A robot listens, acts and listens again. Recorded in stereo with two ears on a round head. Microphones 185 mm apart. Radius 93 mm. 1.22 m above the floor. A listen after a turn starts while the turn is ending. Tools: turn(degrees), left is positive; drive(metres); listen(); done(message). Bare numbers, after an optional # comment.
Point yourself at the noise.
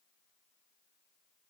listen()
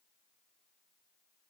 listen()
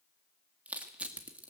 turn(-30)
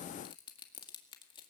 # So it is at 25° left.
turn(25)
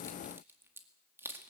# The crushing is now 10° right.
turn(-10)
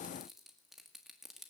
done("Found it: crushing, straight ahead, 2 to 4 m away.")